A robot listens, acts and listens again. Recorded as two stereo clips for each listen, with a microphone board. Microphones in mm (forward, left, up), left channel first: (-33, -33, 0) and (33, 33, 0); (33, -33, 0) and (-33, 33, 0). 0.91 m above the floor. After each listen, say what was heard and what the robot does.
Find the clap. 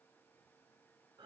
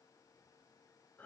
Keep listening.
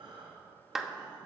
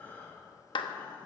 The clap: 40° right. Turn 40° right.
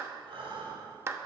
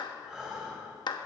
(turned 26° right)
The clap is now 15° right. Turn 15° right.
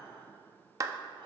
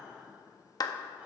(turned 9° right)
Facing the clap, under 1 m away.